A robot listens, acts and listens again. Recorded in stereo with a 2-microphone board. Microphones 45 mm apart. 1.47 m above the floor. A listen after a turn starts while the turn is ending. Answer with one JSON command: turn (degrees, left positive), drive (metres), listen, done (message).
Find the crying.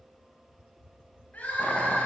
{"turn": 35}
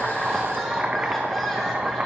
{"done": "Found it: crying, straight ahead, over 4 m away."}